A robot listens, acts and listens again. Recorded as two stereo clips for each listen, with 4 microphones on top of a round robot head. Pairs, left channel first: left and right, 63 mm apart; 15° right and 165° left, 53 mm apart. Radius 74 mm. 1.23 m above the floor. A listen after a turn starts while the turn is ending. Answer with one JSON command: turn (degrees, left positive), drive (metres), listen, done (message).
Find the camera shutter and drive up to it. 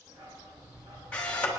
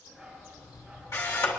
{"turn": 20}
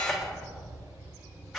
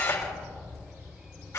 {"listen": true}
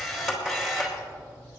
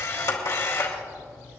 {"drive": 1.0}
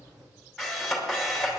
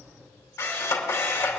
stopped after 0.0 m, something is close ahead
{"done": "Blocked. The camera shutter is further on, straight ahead."}